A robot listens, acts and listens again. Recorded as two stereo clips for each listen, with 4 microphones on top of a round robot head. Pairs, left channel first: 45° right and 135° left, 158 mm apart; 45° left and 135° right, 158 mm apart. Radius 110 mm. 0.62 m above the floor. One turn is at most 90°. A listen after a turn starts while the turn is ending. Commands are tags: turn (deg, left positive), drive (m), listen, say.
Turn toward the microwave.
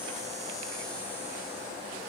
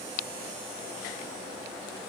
<listen/>
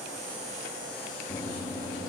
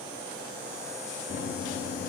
<turn deg="20"/>
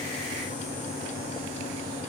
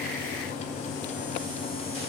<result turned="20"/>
<say>Found it: a microwave, straight ahead, under 1 m away.</say>